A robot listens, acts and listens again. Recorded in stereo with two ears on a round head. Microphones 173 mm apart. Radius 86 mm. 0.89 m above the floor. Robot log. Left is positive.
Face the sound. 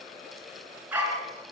cmd yaw -30
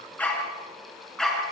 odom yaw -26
cmd yaw +30
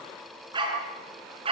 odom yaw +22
note: So it is at 30° right.
cmd yaw -30
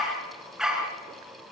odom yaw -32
end: Found it: a dog barking, straight ahead.